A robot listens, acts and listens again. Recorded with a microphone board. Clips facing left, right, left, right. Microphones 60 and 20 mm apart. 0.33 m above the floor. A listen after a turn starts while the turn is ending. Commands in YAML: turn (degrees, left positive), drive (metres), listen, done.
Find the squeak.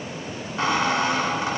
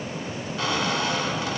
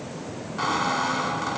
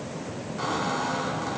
turn: 30
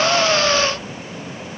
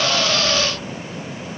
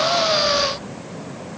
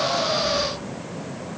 listen: true
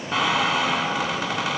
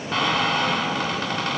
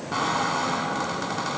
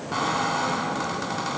done: "Facing the squeak."